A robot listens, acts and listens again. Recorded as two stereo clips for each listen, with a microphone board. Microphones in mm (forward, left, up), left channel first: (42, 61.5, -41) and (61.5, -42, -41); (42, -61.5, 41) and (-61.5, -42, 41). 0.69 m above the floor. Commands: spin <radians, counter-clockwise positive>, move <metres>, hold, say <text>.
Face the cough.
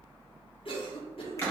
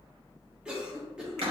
spin 1.57
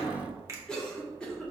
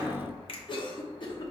spin 0.35
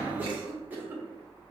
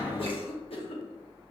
spin -0.17
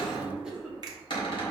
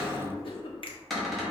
say Facing the cough.